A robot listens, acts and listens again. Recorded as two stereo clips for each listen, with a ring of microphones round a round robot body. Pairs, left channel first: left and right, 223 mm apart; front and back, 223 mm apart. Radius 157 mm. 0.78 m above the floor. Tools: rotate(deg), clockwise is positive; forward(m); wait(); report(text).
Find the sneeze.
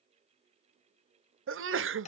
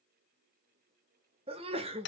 rotate(110)
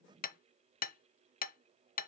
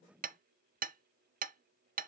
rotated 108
report("Facing where the sneeze came from. I can't hear it now.")